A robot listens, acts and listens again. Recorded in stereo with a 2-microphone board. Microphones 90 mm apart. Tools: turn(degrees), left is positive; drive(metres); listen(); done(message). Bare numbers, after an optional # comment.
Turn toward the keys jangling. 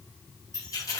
# The keys jangling: about 35° left or 145° left.
turn(35)
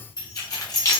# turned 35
# The keys jangling: about 35° left or 145° left.
turn(35)
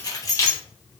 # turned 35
# The keys jangling: about 35° left or 145° left.
turn(35)
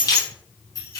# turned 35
# The keys jangling: about 35° left or 145° left.
turn(35)
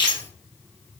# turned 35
# So it is at 125° left.
turn(125)
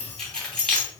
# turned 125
done("Found it: keys jangling, straight ahead.")